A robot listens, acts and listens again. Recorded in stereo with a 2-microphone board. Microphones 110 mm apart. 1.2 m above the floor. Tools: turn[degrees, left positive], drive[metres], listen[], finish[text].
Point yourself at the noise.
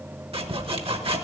Thought: The sawing: about 60° right or 120° right.
Action: turn[-60]
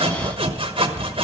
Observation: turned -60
Thought: So it is at 55° right.
Action: turn[-55]
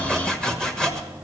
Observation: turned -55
Action: finish[Found it: sawing, straight ahead, 1 to 2 m away.]